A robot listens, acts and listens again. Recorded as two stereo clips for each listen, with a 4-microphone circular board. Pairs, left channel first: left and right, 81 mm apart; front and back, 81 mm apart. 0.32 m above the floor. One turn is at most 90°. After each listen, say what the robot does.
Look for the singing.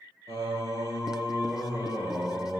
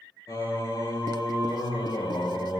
Turn 30° right.
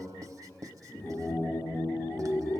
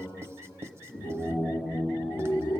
Turn 35° left.
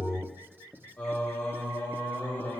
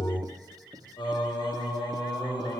Turn 20° left.
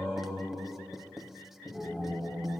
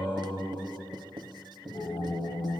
Turn 10° right.
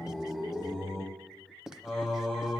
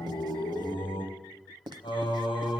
Found it: singing, straight ahead.